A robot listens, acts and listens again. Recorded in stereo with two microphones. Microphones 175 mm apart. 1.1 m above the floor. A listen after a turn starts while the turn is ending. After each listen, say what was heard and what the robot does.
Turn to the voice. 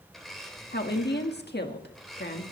The woman speaking: about 70° left or 110° left. Turn 70° left.
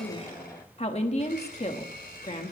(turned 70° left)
So it is at 40° left. Turn 40° left.
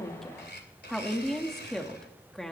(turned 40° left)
Found it: a woman speaking, straight ahead.